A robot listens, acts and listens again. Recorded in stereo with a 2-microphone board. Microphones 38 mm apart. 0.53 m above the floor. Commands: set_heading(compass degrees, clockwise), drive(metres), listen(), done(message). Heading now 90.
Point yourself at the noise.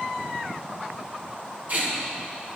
set_heading(145)
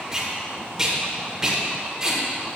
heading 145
set_heading(165)
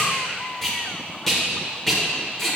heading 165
done("Found it: tape being pulled, straight ahead.")